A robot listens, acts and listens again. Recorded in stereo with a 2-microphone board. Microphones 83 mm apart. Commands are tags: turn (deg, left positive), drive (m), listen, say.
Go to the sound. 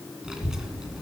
<turn deg="-30"/>
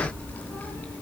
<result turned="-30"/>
<turn deg="20"/>
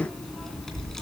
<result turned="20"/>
<drive m="1.0"/>
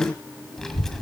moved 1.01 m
<drive m="1.0"/>
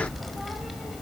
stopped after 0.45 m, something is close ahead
<say>Arrived at the child speaking, straight ahead.</say>